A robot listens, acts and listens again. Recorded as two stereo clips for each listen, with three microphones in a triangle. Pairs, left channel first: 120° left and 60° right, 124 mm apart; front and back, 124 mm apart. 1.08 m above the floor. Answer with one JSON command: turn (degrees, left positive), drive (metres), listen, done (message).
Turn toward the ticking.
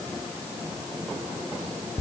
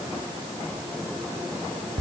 {"listen": true}
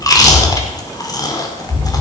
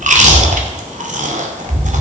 {"listen": true}
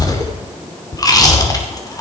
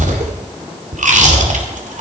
{"done": "I can't make out ticking, only chewing."}